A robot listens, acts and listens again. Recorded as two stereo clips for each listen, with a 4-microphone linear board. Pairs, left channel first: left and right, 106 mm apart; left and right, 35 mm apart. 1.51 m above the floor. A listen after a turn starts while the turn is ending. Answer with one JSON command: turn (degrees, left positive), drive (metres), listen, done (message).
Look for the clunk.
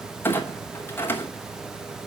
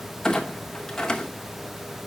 {"turn": 20}
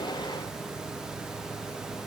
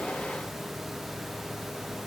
{"listen": true}
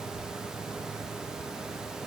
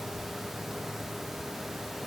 {"done": "I heard a clunk, but can't make it out now. It was about straight ahead or 140° left."}